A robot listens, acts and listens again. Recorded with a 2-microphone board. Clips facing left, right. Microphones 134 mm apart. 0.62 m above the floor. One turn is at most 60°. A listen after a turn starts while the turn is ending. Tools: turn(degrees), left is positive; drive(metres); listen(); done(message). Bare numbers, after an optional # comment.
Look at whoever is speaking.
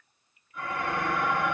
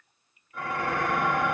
listen()
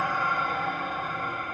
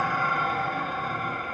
listen()
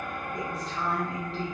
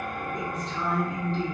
turn(30)
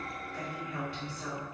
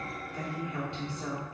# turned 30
# So it is at 30° right.
turn(-30)
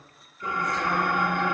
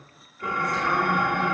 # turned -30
listen()
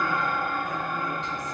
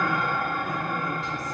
listen()
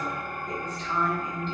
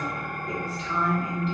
done("Facing the woman speaking.")